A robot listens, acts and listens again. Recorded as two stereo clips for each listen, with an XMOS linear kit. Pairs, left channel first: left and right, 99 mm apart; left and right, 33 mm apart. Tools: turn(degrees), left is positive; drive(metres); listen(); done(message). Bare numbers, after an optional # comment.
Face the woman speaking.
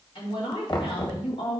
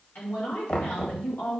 # The woman speaking: about 65° left or 115° left.
turn(65)
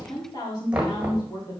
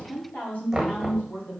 # So it is at 40° left.
turn(40)
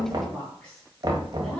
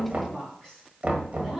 done("Facing the woman speaking, over 4 m away.")